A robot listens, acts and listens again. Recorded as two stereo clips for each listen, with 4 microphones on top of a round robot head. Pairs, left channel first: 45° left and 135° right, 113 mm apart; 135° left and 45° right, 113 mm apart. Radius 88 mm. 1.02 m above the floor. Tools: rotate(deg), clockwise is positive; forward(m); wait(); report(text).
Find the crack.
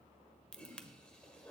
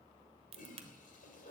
rotate(30)
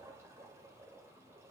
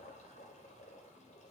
report("I heard a crack from this way, but can't make it out now.")